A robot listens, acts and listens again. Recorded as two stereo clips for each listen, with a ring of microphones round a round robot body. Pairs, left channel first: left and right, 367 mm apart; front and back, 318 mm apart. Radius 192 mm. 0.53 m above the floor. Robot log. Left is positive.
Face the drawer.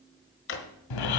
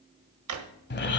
note: The drawer: 150° left.
cmd yaw +150
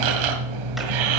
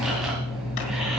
cmd idle
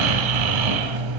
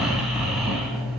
cmd idle
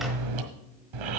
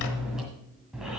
end: Facing where the drawer came from. I can't hear it now.